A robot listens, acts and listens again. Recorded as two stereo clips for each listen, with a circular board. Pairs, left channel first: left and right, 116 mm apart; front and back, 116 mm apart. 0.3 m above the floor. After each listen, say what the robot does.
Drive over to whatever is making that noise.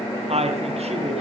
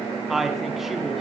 Turn 95° right.
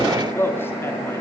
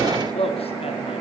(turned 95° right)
Turn 20° left.
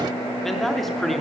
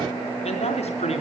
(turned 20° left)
Drive 1.0 m forward.
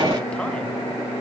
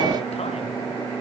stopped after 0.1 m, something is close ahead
Keep listening.
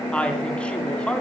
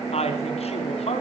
Turn 10° left.
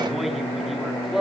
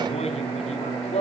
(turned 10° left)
Blocked. The woman speaking is further on, straight ahead.